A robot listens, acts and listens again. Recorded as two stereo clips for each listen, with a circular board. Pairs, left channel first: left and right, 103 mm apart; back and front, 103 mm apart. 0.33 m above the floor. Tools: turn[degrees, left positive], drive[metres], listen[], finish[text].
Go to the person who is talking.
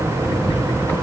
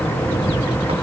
Action: listen[]
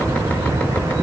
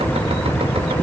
Action: listen[]
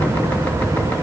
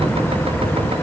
Action: finish[I can't make out anyone speaking to turn to.]